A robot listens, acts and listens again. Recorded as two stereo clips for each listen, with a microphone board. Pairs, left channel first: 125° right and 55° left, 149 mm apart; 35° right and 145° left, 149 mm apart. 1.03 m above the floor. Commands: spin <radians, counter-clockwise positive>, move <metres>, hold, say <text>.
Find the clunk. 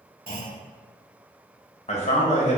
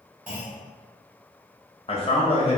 spin 1.13
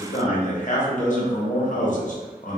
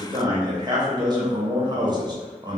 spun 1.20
say Facing where the clunk came from. I can't hear it now.